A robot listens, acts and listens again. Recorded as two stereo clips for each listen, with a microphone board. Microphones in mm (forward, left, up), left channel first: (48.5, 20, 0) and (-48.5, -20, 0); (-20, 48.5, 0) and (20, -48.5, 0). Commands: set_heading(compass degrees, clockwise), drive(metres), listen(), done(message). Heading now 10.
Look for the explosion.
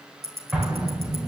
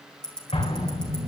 set_heading(245)
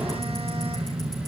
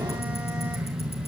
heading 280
set_heading(245)
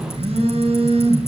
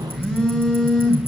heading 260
set_heading(245)
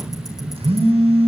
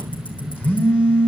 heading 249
done("Facing where the explosion came from. I can't hear it now.")